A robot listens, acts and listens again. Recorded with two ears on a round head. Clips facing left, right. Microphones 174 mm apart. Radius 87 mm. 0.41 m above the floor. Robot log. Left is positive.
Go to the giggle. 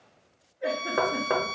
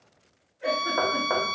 cmd yaw -30
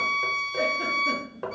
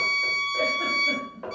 cmd idle
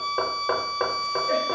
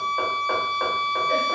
cmd idle
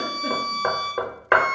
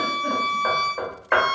end: I heard a giggle, but can't make it out now. It was about 25° left or 145° right. I did not reach it.